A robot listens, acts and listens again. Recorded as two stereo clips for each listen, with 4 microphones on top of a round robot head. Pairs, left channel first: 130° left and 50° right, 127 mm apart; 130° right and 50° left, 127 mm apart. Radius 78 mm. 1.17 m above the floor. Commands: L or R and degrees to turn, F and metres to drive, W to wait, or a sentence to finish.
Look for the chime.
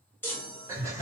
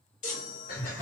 R155
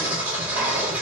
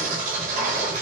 W
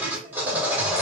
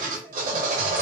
W
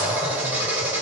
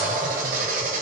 I heard a chime from this way, but can't make it out now.